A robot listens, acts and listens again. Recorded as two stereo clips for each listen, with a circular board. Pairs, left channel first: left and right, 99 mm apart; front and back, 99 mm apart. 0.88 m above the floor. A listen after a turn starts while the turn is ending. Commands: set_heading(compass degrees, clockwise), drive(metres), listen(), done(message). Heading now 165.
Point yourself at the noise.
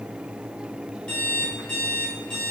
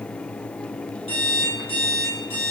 set_heading(150)
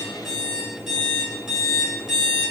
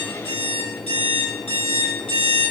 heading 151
done("Facing the alarm clock.")